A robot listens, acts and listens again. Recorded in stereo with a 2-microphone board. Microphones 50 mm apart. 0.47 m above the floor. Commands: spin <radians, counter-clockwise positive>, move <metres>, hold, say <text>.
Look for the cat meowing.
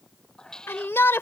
spin 0.52
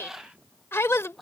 say Found it: a cat meowing, straight ahead.